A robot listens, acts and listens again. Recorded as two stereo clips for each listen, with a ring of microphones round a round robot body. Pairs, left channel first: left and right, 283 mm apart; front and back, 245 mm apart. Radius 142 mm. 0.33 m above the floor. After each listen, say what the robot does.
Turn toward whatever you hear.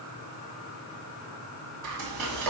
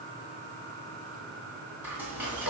Turn 95° right.
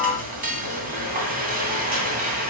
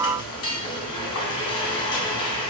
Turn 30° right.
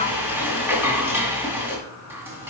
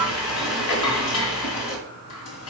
Turn 10° right.
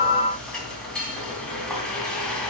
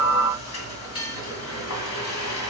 Facing the frying, 2 to 4 m away.